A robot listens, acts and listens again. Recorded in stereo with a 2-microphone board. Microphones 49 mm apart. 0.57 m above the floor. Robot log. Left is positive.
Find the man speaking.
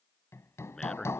cmd yaw +30
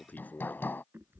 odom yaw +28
note: So it is at 145° left.
cmd yaw +145
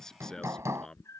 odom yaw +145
note: The man speaking is now 15° left.
cmd yaw +15
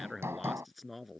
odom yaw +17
end: Facing the man speaking.